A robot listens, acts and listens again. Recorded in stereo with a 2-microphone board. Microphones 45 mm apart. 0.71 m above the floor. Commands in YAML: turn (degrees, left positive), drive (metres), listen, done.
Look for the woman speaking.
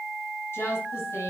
turn: 70
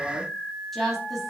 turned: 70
done: "Found it: a woman speaking, straight ahead."